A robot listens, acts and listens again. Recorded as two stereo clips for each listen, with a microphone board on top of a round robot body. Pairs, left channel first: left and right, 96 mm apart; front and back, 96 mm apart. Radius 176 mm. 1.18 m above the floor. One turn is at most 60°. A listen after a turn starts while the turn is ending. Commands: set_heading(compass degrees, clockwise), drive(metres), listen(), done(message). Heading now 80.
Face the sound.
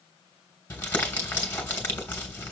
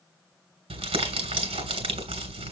set_heading(20)
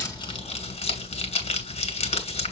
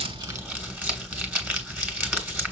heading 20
set_heading(320)
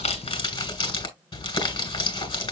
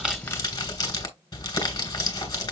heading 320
set_heading(265)
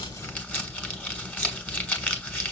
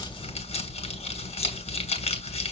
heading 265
set_heading(250)
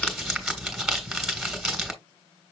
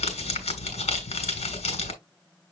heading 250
done("Facing the crumpling, 2 to 4 m away.")